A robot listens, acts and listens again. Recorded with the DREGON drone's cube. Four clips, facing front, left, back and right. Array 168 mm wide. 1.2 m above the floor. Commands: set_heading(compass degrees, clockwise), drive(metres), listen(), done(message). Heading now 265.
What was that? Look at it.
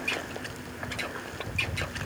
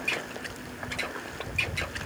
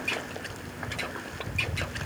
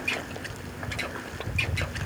listen()
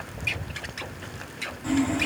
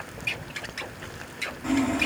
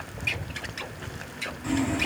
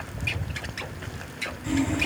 set_heading(200)
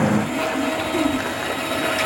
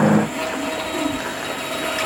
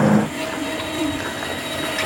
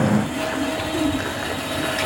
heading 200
done("Found it: sawing, straight ahead.")